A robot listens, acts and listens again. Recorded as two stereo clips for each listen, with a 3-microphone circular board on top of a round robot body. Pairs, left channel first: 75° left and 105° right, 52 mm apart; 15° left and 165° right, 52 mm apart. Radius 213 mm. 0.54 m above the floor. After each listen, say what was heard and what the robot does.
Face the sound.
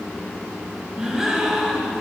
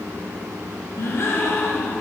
The gasp: 25° right. Turn 25° right.
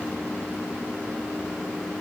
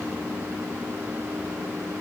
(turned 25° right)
Facing where the gasp came from. I can't hear it now.